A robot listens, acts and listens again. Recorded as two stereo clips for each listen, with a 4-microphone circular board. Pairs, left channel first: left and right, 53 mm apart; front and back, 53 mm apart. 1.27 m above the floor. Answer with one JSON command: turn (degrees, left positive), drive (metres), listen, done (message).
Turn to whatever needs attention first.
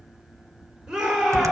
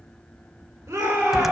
{"turn": -165}
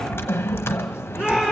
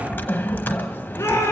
{"turn": -20}
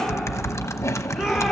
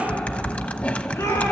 {"done": "Found it: a shout, straight ahead, over 4 m away."}